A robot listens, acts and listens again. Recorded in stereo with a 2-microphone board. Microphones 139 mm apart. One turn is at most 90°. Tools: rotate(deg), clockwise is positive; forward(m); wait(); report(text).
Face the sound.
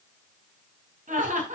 rotate(70)
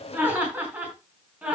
rotate(10)
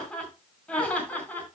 rotate(-15)
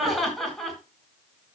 report("Facing the laughter.")